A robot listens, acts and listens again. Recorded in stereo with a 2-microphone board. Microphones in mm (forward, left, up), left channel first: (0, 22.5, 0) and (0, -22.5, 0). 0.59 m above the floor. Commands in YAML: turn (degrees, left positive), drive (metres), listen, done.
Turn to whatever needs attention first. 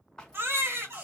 turn: -65
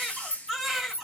done: "Found it: a baby crying, straight ahead."